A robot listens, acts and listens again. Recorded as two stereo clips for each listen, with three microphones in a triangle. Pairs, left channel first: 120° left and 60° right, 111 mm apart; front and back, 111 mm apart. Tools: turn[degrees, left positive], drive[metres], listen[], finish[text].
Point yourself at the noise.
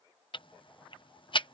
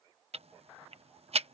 Thought: The ticking: 160° left.
Action: turn[160]
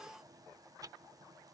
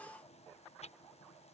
Action: listen[]
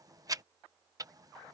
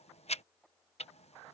Action: finish[Found it: ticking, straight ahead.]